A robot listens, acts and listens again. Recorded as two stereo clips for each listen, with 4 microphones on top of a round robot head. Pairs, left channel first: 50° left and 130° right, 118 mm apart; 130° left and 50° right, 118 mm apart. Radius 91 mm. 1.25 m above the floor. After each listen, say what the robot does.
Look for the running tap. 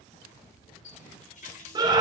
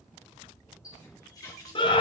Turn 70° left.
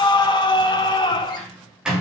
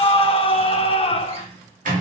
Keep listening.
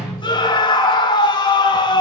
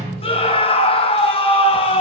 Keep listening.
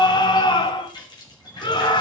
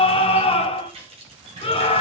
Turn 10° right.
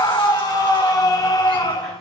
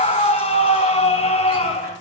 Keep listening.
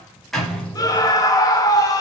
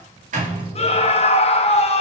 Keep listening.
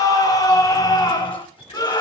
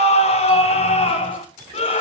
Facing where the running tap came from. I can't hear it now.